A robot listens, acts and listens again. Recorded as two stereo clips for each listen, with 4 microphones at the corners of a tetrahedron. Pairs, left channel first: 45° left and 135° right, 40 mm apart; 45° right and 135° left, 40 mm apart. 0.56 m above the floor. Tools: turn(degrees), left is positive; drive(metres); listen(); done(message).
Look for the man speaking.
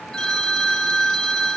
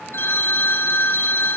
listen()
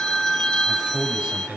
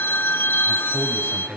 turn(degrees=160)
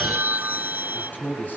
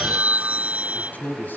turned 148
done("Facing the man speaking, over 4 m away.")